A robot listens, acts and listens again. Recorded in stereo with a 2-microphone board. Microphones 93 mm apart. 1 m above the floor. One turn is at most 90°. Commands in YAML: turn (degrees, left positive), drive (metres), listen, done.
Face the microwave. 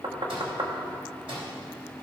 turn: -75
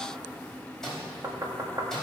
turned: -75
done: "Found it: a microwave, straight ahead."